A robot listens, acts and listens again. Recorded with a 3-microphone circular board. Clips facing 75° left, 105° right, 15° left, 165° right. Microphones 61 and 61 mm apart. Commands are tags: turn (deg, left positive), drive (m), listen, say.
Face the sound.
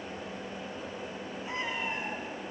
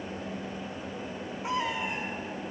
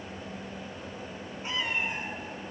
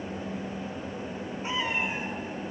<turn deg="-85"/>
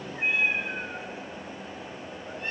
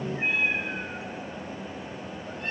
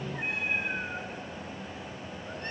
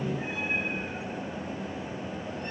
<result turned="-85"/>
<say>Facing the cat meowing.</say>